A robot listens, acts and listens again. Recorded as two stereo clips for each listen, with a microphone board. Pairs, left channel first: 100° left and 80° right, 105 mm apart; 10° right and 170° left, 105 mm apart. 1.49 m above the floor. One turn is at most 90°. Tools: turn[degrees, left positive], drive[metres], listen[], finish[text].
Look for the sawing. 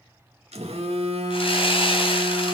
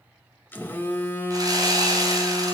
Thought: The sawing: 120° left.
Action: turn[90]
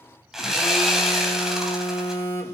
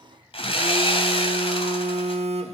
Thought: The sawing is now 10° left.
Action: turn[10]
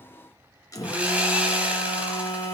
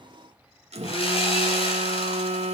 Action: finish[Found it: sawing, straight ahead, 2 to 4 m away.]